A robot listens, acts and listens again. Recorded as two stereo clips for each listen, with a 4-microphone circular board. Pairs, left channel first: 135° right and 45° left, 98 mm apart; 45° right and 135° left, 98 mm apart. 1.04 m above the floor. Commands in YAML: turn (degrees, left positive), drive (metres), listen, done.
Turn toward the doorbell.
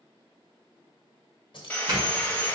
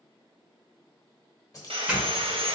turn: 65
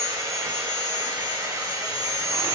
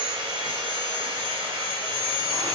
listen: true
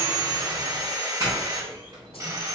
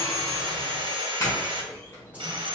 turn: 10
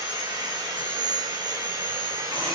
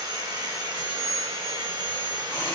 listen: true
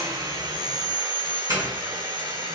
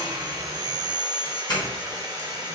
done: "Facing the doorbell."